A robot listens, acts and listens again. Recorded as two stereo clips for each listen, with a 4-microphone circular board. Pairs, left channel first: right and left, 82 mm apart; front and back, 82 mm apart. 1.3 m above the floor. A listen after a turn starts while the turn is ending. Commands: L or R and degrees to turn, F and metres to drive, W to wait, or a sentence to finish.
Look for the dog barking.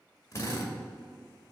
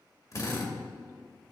W
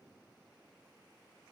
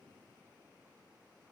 W
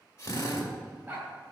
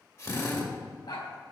L15
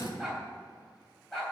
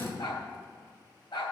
Found it: a dog barking, straight ahead, 2 to 4 m away.